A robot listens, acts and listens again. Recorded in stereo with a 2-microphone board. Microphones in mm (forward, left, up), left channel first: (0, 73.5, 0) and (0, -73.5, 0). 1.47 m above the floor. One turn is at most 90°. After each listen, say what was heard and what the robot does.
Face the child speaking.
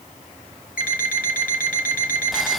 Keep listening.
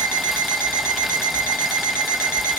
Keep listening.
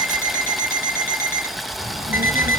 Turn 90° right.
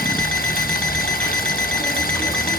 Keep listening.
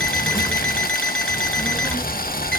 The child speaking is now 15° left. Turn 15° left.
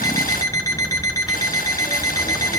Facing the child speaking, over 4 m away.